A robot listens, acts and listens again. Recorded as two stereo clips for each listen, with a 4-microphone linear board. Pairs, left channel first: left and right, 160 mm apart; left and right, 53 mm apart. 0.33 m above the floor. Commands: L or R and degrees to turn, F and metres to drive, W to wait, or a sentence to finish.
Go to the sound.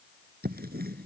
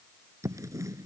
R90
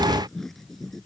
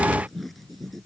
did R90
F1.0
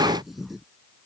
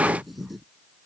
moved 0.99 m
F1.0
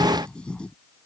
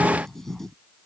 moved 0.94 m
F1.0
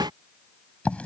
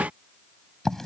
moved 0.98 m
L10
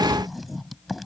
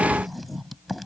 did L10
F1.0
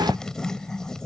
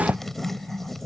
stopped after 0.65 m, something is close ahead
I am next to the writing.